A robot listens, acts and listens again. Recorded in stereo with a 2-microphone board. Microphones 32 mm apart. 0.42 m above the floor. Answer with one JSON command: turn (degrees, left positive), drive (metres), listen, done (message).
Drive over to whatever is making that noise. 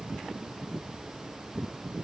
{"listen": true}
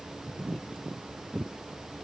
{"listen": true}
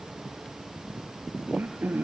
{"turn": -65}
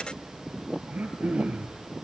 {"turn": -50}
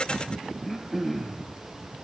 {"drive": 1.0}
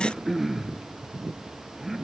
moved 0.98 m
{"turn": -10}
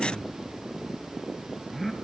{"drive": 1.0}
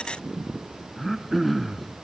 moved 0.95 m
{"drive": 1.0}
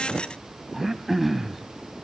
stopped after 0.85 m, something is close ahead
{"turn": -10}
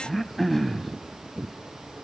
{"done": "I am next to the throat clearing."}